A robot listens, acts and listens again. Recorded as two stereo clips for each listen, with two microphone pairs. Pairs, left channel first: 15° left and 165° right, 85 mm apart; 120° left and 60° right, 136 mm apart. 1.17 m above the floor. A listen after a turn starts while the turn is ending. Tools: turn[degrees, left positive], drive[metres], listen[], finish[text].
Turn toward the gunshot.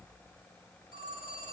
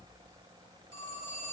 Action: listen[]
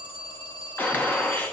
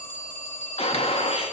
Thought: The gunshot: 85° left.
Action: turn[85]
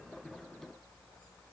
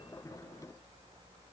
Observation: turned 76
Thought: Nothing new. It was at 10° left.
Action: turn[10]
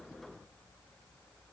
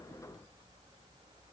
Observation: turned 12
Action: finish[Facing where the gunshot came from. I can't hear it now.]